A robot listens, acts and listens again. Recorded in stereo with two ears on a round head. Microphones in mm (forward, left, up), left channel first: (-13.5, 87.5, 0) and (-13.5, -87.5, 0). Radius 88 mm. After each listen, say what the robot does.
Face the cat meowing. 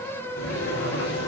Keep listening.
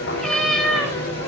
Turn 30° left.
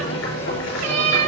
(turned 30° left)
Turn 40° right.
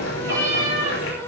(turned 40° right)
Turn 20° right.
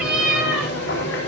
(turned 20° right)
Facing the cat meowing.